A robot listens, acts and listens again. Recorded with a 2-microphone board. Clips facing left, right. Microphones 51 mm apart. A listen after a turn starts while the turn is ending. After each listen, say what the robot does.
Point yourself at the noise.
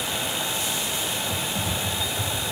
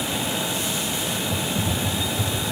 Turn 30° left.
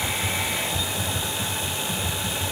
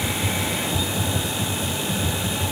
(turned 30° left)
Turn 25° right.
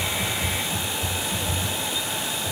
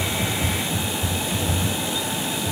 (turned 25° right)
Facing the typing on a keyboard.